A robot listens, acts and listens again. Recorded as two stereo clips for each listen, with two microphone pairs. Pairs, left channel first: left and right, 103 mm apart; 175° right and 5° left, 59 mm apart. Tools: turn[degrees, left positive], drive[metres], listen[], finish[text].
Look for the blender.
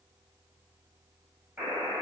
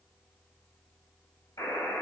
Action: listen[]
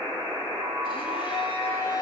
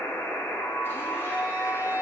Thought: The blender: 130° left.
Action: turn[130]
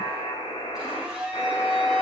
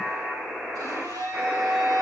Action: finish[Found it: a blender, straight ahead.]